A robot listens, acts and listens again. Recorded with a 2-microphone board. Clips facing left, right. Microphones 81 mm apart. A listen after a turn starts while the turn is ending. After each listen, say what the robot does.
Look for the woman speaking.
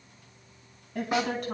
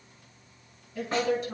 Turn 60° left.
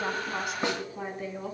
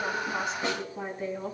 Facing the woman speaking.